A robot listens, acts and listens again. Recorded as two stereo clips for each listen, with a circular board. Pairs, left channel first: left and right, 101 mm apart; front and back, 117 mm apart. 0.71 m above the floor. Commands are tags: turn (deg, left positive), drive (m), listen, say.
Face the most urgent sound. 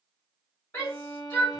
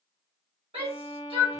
<turn deg="160"/>
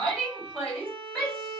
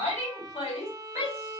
<say>Facing the shout, 1 to 2 m away.</say>